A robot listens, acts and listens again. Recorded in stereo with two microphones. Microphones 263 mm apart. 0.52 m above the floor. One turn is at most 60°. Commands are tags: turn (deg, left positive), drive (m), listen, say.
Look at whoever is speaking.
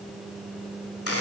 <listen/>
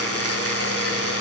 <listen/>
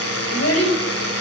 <turn deg="60"/>
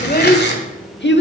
<turn deg="50"/>
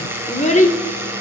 <turn deg="30"/>
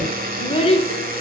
<turn deg="25"/>
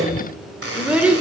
<say>Found it: a child speaking, straight ahead.</say>